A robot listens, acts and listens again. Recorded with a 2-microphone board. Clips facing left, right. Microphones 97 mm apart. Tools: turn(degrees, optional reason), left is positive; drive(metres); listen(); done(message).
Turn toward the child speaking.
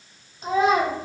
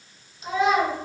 turn(degrees=40, reason="The child speaking: about 40° left or 140° left.")
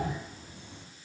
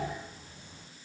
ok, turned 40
listen()
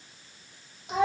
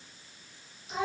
turn(degrees=105, reason="So it is at 105° left.")
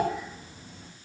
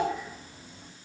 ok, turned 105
listen()
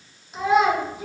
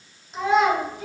done("Facing the child speaking.")